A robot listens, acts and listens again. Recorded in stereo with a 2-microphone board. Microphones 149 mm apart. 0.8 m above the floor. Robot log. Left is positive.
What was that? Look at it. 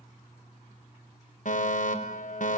note: The fire alarm: about 60° left or 120° left.
cmd yaw +60
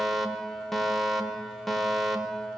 end: Facing the fire alarm.